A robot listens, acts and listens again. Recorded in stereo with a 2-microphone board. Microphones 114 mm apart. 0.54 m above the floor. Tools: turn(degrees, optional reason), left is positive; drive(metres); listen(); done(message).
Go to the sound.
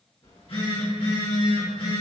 turn(degrees=60, reason="The phone buzzing: about 60° left or 120° left.")
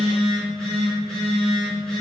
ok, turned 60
drive(metres=1.0)
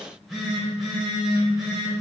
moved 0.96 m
drive(metres=1.0)
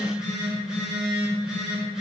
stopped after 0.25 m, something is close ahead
turn(degrees=-10, reason="The phone buzzing is now 10° right.")
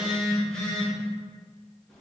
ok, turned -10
done("Arrived at the phone buzzing, straight ahead.")